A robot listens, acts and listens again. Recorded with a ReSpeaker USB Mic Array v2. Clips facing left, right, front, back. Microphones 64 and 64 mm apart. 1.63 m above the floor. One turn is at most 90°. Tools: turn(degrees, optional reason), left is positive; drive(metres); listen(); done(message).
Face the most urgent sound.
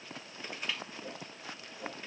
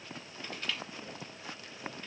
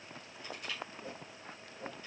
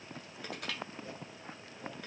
listen()
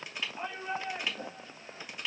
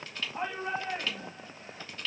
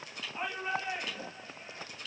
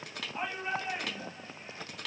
turn(degrees=-90, reason="The shout: 95° right.")
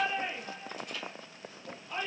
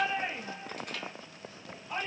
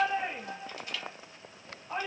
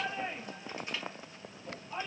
turn(degrees=-15, reason="The shout is now 15° right.")
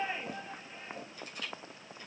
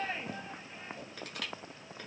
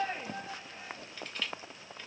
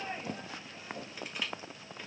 done("Facing the shout, 2 to 4 m away.")